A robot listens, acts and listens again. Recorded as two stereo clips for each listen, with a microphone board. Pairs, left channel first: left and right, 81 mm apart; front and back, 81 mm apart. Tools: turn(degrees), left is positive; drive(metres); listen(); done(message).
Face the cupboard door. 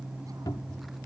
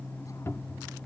turn(degrees=55)
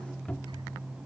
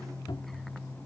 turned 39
turn(degrees=15)
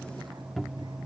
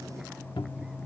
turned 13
done("Found it: a cupboard door, straight ahead.")